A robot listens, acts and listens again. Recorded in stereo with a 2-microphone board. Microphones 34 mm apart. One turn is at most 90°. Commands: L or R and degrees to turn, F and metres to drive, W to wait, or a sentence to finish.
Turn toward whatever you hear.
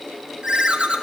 R30
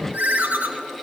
R90
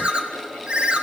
R35
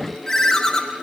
L15
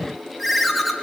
Found it: a ringtone, straight ahead, 1 to 2 m away.